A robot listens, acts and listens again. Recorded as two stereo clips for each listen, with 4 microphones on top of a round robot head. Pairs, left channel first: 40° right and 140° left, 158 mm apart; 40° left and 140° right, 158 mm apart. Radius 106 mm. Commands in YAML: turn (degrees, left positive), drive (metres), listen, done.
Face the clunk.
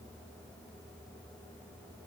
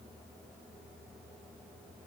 listen: true
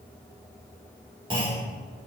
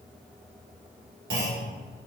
turn: -160
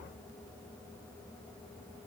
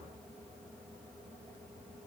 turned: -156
done: "Facing where the clunk came from. I can't hear it now."